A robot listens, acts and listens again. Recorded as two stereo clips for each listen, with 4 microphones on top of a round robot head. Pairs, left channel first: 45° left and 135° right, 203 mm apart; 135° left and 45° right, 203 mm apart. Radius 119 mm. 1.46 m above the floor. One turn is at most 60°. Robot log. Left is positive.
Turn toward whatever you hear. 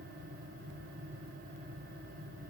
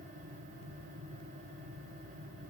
cmd idle
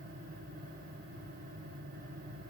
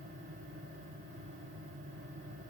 cmd idle
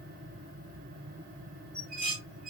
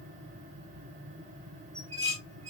note: The dishes clattering: 105° right.
cmd yaw -60
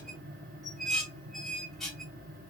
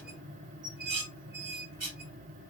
note: The dishes clattering is now 40° right.
cmd yaw -40
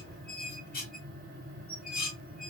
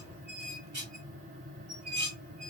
end: Facing the dishes clattering, 1 to 2 m away.